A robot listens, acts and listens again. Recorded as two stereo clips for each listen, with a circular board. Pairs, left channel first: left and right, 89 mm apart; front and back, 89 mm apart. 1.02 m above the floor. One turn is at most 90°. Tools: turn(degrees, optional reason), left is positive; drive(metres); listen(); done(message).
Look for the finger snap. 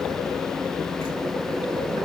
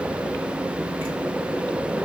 listen()
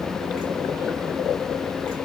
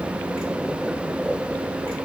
listen()
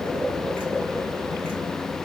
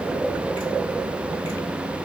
done("I can't make out a finger snap to turn to.")